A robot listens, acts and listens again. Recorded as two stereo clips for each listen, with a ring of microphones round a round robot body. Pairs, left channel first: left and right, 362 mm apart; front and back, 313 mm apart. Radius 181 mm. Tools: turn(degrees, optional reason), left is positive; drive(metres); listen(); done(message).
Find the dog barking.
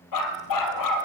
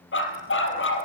turn(degrees=50, reason="The dog barking: 50° left.")
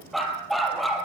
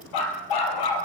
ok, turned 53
done("Facing the dog barking.")